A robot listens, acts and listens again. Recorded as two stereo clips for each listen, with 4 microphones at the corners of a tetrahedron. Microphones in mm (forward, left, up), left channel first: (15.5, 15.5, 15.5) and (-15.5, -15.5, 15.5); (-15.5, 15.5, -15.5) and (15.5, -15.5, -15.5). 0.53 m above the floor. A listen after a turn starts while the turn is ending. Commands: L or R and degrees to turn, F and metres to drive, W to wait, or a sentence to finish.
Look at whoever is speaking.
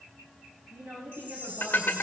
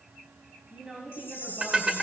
R110
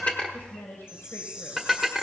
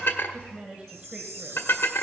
L15
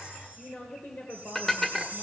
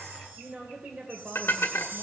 Facing the woman speaking.